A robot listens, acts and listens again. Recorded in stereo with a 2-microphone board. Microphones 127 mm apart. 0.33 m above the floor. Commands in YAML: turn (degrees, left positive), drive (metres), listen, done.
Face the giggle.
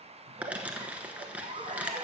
turn: -55
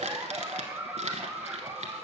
turn: -20
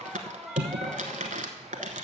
done: "Found it: a giggle, straight ahead, under 1 m away."